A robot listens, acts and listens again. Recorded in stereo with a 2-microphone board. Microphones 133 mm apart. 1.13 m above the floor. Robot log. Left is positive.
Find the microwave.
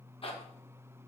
cmd idle
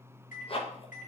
cmd yaw +90
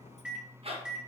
end: Found it: a microwave, straight ahead, under 1 m away.